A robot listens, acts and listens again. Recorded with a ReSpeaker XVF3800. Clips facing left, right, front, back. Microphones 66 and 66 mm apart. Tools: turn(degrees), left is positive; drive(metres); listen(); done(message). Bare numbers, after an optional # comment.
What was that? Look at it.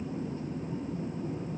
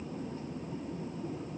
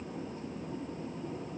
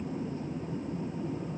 listen()
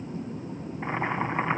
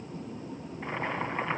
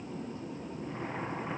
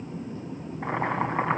# The boiling: 160° left.
turn(160)
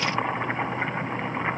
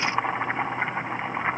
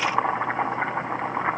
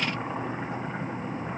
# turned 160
# The boiling is now 10° right.
turn(-10)
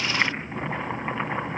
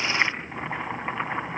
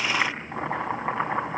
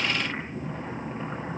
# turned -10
done("Found it: boiling, straight ahead.")